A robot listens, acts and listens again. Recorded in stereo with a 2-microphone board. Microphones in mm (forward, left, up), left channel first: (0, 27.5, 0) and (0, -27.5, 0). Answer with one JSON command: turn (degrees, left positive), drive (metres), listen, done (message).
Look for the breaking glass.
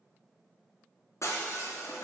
{"turn": 65}
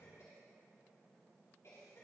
{"listen": true}
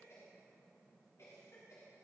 {"done": "I heard breaking glass, but can't make it out now. It was about straight ahead or 50° left."}